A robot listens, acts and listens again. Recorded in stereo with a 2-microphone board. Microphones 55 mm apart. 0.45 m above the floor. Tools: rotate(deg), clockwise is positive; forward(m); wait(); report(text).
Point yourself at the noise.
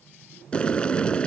rotate(-20)
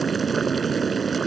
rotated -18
report("Facing the boiling.")